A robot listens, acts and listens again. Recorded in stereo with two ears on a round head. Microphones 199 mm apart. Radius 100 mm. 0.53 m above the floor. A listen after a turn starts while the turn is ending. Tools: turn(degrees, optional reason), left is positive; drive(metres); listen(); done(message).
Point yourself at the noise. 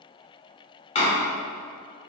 turn(degrees=30, reason="The door slam: about 30° left or 150° left.")
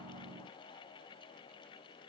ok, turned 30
listen()
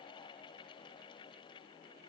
done("I heard a door slam, but can't make it out now. It was about straight ahead or 120° left.")